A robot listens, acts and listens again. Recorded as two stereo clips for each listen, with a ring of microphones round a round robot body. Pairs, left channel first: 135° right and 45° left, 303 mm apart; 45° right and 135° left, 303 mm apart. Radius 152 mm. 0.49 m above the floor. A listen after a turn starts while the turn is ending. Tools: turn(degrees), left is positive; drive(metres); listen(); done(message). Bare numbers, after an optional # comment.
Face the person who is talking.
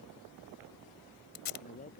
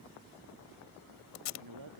# The man speaking: 160° left.
turn(160)
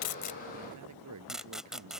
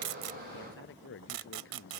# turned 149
# The man speaking is now 10° left.
turn(10)
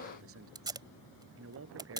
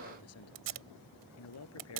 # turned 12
done("Facing the man speaking.")